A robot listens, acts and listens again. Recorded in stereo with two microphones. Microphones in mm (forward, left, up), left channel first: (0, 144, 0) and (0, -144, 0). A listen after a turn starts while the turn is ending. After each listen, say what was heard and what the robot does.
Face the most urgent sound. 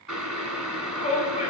The shout: about 25° left or 155° left. Turn 25° left.
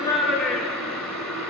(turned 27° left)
Facing the shout.